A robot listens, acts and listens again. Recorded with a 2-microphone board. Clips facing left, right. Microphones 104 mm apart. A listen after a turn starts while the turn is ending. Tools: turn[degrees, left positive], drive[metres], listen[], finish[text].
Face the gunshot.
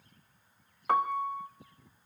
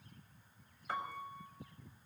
Action: listen[]
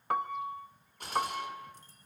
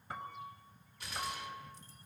Thought: The gunshot: about 55° left or 125° left.
Action: turn[55]
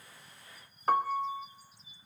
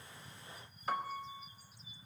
Action: listen[]
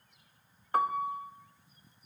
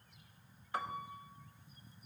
Action: finish[I heard a gunshot, but can't make it out now. It was about straight ahead or 70° left.]